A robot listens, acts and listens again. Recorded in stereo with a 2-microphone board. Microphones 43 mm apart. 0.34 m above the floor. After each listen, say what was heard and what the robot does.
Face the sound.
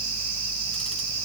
Keep listening.
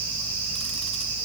Keep listening.
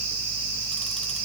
I can't make out anything to turn to.